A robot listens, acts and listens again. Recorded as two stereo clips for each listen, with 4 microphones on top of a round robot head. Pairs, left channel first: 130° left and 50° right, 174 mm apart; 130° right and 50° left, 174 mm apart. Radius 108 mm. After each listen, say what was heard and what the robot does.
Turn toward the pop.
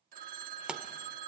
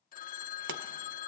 The pop: 35° left. Turn 35° left.
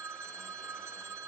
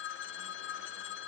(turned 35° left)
I heard a pop from this way, but can't make it out now.